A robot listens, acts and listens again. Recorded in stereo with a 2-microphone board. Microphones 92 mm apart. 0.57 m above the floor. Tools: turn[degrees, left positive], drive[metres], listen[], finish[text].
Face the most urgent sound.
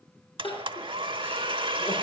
Thought: The crying: about 75° left or 105° left.
Action: turn[75]
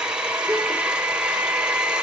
Action: listen[]
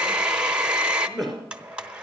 Action: finish[Found it: crying, straight ahead.]